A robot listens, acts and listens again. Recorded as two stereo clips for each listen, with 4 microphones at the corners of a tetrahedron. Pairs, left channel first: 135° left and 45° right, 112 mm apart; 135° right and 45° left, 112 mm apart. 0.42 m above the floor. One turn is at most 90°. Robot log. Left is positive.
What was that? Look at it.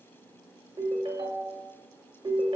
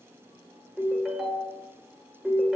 note: The ringtone: 35° right.
cmd yaw -35
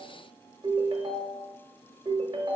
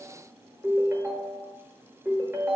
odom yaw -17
note: The ringtone is now 20° right.
cmd yaw -20
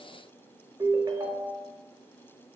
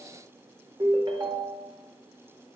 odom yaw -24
end: Facing the ringtone.